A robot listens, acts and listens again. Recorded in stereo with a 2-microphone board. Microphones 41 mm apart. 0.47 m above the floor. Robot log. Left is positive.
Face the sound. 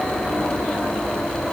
cmd idle
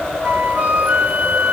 note: The flute: about 35° right or 145° right.
cmd yaw -35
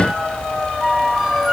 note: So it is at 10° right.
cmd yaw -10
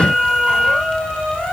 end: Found it: a flute, straight ahead.